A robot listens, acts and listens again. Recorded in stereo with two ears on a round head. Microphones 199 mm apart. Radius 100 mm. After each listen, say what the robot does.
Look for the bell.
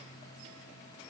Keep listening.
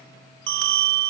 Turn 60° right.
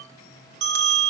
Turn 55° right.
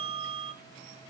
Turn 25° right.
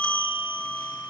Found it: a bell, straight ahead.